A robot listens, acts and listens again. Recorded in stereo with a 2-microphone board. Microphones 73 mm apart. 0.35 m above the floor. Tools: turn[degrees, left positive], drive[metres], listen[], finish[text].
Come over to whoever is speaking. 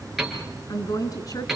Thought: The woman speaking: about 60° left or 120° left.
Action: turn[60]
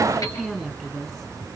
Action: drive[1.0]
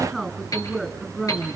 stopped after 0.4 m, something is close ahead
Action: finish[Blocked. The woman speaking is further on, straight ahead.]